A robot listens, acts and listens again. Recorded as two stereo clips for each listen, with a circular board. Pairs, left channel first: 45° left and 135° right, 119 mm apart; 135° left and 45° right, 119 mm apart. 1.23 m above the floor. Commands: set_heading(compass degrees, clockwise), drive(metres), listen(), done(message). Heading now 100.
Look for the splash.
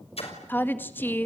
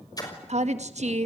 set_heading(20)
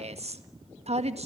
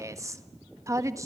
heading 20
done("Facing where the splash came from. I can't hear it now.")